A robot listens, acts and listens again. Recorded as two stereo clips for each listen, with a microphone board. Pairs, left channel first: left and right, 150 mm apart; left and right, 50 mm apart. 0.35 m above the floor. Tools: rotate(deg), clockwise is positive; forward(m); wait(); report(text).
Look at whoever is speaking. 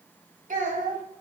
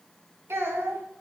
rotate(65)
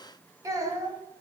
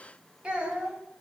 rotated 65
rotate(25)
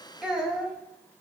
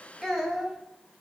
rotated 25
report("Facing the child speaking.")